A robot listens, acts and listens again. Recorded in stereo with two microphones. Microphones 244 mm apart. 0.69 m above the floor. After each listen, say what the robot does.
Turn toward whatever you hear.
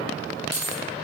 Turn 90° left.
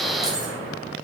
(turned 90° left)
Keep listening.
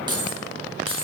Turn 20° right.
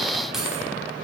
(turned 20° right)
Keep listening.
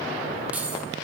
Facing the keys jangling.